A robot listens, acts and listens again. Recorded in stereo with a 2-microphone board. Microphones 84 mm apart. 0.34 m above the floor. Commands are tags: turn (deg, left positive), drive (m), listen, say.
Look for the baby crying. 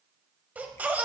<turn deg="-20"/>
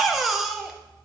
<say>Found it: a baby crying, straight ahead, under 1 m away.</say>